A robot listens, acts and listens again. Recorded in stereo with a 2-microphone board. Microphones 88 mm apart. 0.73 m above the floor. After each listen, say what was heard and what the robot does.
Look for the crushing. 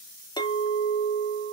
Keep listening.
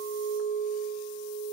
Keep listening.
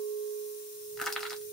Turn 30° left.
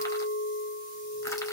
Keep listening.
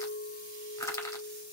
So it is at 140° left. Turn 140° left.
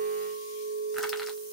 Keep listening.
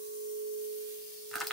Found it: crushing, straight ahead, 1 to 2 m away.